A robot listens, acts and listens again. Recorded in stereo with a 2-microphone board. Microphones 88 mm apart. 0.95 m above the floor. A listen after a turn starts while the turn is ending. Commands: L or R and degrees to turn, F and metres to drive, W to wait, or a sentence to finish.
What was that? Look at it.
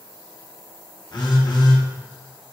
L50
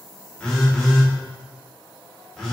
Found it: a phone buzzing, straight ahead.